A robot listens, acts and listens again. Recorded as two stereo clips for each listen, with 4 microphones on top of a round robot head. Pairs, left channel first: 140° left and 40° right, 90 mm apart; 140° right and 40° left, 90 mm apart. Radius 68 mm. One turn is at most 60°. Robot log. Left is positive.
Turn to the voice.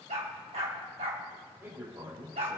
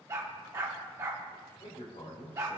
note: The man speaking: 105° right.
cmd yaw -60
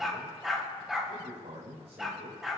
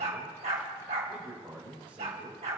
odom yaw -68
note: The man speaking is now 35° right.
cmd yaw -35
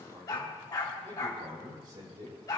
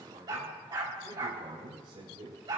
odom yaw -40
end: Found it: a man speaking, straight ahead.